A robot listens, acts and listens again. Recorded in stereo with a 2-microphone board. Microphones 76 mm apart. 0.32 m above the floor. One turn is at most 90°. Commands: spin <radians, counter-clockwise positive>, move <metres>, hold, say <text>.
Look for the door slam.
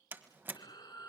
spin -0.52
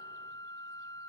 hold
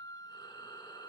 say I heard a door slam, but can't make it out now. It was about straight ahead or 120° right.